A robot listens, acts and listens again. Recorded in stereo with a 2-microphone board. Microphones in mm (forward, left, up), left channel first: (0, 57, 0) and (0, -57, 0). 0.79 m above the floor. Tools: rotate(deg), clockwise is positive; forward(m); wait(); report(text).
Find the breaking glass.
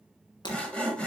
rotate(-40)
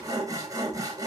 wait()
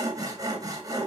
report("I heard breaking glass, but can't make it out now. It was about straight ahead or 100° left.")